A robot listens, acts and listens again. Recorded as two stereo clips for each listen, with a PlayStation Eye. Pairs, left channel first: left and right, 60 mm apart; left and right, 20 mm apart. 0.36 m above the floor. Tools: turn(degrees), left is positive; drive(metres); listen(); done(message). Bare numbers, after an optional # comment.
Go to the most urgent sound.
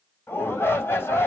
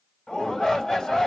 # The shout: about 40° left or 140° left.
turn(40)
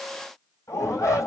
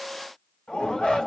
# So it is at 95° left.
turn(95)
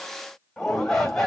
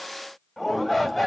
# The shout is now 10° left.
turn(10)
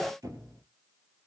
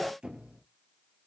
drive(1.0)
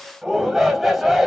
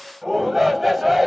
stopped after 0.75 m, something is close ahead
done("I am next to the shout.")